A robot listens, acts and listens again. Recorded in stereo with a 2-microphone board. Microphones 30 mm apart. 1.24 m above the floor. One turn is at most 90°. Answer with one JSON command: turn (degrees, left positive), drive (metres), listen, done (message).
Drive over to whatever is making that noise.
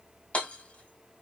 {"turn": 50}
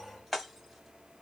{"drive": 1.0}
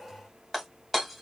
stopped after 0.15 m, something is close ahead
{"done": "Blocked. The hammering is further on, straight ahead."}